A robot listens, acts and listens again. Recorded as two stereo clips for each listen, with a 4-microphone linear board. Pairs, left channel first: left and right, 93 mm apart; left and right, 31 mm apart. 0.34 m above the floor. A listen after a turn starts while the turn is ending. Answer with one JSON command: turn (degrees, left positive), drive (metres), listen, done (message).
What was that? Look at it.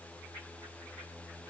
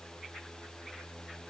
{"listen": true}
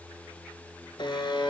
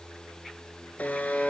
{"turn": 65}
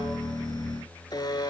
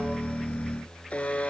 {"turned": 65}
{"turn": 50}
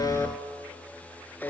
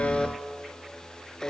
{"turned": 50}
{"turn": 20}
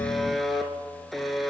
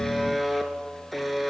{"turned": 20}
{"done": "Found it: a buzzer, straight ahead."}